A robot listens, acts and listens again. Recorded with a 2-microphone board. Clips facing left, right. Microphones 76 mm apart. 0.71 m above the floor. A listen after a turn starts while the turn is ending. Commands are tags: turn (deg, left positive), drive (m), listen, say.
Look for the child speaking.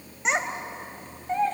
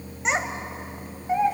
<turn deg="-30"/>
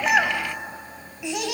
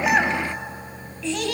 <turn deg="10"/>
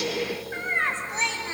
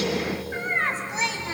<say>Facing the child speaking.</say>